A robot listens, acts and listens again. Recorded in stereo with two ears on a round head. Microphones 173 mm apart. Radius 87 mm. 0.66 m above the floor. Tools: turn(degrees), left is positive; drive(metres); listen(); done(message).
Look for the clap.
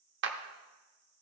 turn(degrees=-60)
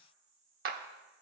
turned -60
turn(degrees=-50)
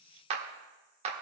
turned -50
turn(degrees=-35)
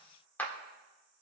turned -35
turn(degrees=10)
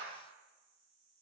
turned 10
listen()
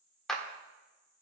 done("Facing the clap.")